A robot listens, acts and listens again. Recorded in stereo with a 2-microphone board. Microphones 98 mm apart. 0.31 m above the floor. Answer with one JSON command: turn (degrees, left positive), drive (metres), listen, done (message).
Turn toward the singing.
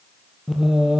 {"turn": -30}
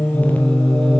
{"turn": 10}
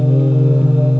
{"turn": -15}
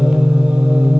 {"turn": -15}
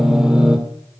{"done": "Found it: singing, straight ahead, 2 to 4 m away."}